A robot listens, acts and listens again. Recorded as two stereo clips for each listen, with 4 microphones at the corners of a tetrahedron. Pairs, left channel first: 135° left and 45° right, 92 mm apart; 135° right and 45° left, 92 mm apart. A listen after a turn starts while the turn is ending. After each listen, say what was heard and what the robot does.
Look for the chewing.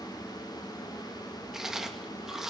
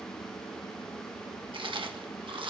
The chewing: 40° left. Turn 40° left.
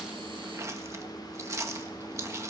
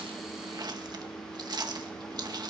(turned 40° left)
The chewing is now 10° left. Turn 10° left.
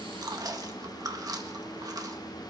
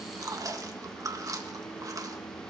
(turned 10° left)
Found it: chewing, straight ahead, 1 to 2 m away.